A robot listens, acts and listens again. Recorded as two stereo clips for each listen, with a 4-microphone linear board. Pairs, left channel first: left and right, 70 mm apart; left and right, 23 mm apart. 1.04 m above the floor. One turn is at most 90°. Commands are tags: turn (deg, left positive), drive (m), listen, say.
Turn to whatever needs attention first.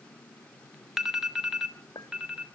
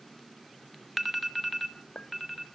<turn deg="-30"/>
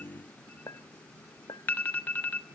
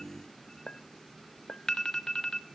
<turn deg="25"/>
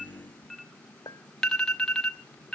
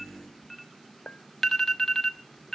<turn deg="10"/>
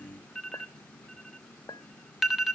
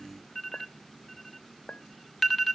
<say>Found it: an alarm, straight ahead, under 1 m away.</say>